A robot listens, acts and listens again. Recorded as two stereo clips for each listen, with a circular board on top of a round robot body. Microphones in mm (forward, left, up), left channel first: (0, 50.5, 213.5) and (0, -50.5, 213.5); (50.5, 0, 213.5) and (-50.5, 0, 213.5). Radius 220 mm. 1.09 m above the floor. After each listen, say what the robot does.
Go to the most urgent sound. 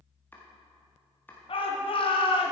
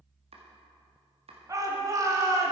Turn 120° left.
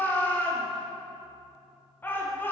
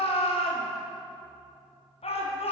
Turn 20° left.
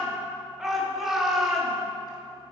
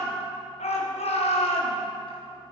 Drive 1.0 m forward.
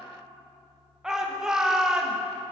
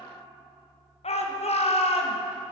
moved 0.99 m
Drive 1.0 m forward.
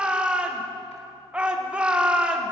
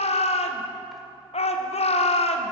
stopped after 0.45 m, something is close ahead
Turn 10° right.
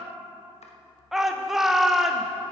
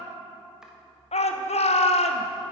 I am next to the shout.